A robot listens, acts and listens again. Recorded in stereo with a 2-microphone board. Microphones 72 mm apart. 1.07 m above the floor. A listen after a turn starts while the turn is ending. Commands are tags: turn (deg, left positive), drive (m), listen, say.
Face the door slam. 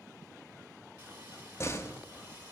<turn deg="35"/>
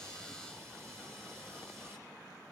<listen/>
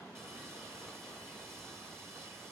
<say>I heard a door slam, but can't make it out now. It was about straight ahead or 110° left.</say>